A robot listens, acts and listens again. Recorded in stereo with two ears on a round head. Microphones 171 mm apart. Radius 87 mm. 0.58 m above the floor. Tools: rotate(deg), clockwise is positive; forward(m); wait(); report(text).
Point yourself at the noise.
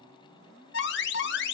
rotate(-60)
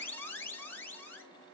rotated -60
rotate(-10)
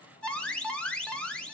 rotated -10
report("Facing the alarm, under 1 m away.")